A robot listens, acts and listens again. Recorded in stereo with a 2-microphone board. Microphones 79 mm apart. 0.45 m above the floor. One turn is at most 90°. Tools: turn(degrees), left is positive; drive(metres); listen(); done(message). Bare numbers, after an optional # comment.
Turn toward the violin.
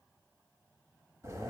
listen()
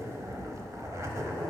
listen()
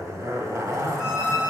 turn(-30)
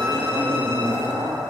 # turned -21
listen()
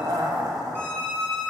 # So it is at 150° right.
turn(-90)
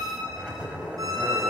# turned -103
# The violin is now 50° right.
turn(-50)
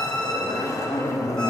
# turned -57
# The violin is now 10° left.
turn(10)
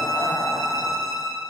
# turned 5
done("Facing the violin, 1 to 2 m away.")